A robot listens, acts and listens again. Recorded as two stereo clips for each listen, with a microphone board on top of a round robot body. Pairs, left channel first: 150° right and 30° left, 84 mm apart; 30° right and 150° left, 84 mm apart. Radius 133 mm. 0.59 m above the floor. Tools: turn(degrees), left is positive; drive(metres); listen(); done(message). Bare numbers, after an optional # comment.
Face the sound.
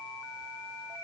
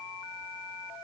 listen()
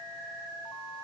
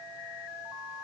listen()
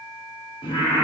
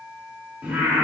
# The singing: 135° right.
turn(-135)
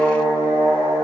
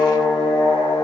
# The singing is now 25° right.
turn(-25)
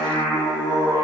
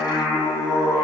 done("Facing the singing, over 4 m away.")